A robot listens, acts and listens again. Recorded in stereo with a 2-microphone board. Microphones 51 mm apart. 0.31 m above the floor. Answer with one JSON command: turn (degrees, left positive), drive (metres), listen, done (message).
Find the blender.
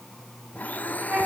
{"turn": 35}
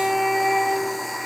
{"done": "Found it: a blender, straight ahead."}